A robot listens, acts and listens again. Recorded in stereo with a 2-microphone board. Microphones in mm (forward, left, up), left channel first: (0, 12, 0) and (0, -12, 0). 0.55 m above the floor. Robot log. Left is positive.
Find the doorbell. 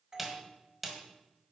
note: The doorbell: about 30° right or 150° right.
cmd yaw -30
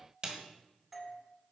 end: Facing the doorbell.